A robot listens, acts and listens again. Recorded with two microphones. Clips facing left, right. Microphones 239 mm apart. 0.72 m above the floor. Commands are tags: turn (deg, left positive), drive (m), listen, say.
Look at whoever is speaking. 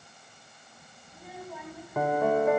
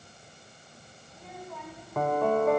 <turn deg="30"/>
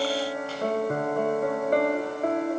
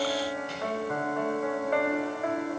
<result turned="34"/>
<listen/>
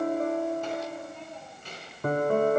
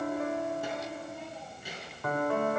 <say>Found it: a child speaking, straight ahead.</say>